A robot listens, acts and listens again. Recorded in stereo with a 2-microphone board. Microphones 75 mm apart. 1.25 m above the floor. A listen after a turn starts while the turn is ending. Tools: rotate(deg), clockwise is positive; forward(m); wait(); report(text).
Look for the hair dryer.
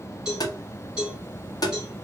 wait()
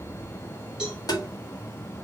wait()
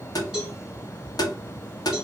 report("I can't make out a hair dryer, only a cowbell and tapping.")